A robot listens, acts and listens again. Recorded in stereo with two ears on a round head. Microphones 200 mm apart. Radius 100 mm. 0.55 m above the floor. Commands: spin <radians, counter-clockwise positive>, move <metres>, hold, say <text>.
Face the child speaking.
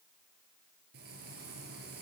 hold
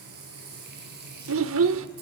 spin -1.13
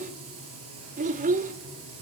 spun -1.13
spin -0.61
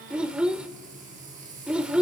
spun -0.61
say Found it: a child speaking, straight ahead, 1 to 2 m away.